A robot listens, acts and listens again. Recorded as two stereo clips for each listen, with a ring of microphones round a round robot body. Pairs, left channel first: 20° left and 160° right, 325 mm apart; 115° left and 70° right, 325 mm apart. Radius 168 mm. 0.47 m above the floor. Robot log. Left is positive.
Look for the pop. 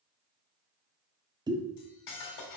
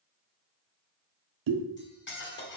note: The pop: 80° right.
cmd yaw -80
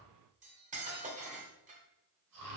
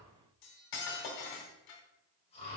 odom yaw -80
end: Facing where the pop came from. I can't hear it now.